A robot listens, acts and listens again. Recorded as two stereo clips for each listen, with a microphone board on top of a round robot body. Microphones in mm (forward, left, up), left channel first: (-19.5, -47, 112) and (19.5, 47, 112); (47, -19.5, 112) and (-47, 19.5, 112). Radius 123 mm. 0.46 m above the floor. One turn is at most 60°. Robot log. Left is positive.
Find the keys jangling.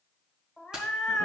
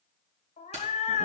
note: The keys jangling: 150° left.
cmd yaw +60
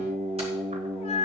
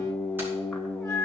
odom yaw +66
note: Nothing new. It was at 85° left.
cmd yaw +60
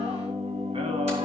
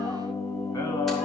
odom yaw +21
note: Nothing new. It was at 65° left.
cmd yaw +60
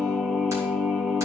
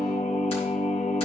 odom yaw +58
end: I heard keys jangling from this way, but can't make it out now.